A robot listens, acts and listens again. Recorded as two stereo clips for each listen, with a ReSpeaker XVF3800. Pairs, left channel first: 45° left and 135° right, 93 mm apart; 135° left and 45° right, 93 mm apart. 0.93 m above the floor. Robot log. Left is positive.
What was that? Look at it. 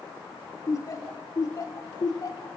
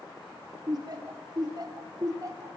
end: Facing the laughter.